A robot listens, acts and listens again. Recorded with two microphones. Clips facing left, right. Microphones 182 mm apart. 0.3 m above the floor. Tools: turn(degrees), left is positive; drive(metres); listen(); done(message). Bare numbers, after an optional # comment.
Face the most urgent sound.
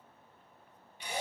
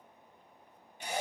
listen()
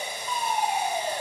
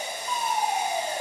turn(30)
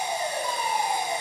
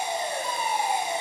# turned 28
# So it is at 30° right.
turn(-30)
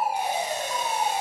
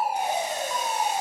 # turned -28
done("Found it: a fire alarm, straight ahead.")